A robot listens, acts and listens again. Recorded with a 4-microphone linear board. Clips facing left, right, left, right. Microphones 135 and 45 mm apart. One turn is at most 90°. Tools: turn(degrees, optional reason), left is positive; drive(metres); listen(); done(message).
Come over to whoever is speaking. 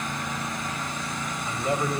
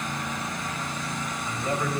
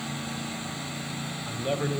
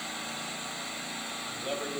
turn(degrees=20, reason="The man speaking: about 20° left or 160° left.")
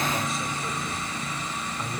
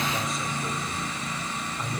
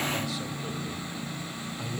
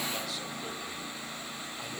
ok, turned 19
drive(metres=1.0)
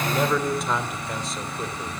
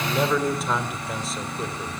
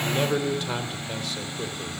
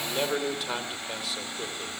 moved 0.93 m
drive(metres=1.0)
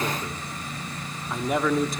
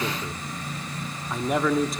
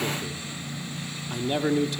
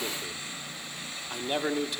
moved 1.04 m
drive(metres=1.0)
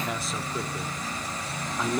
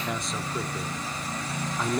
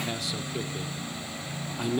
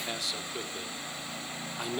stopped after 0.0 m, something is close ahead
done("Arrived at the man speaking, straight ahead.")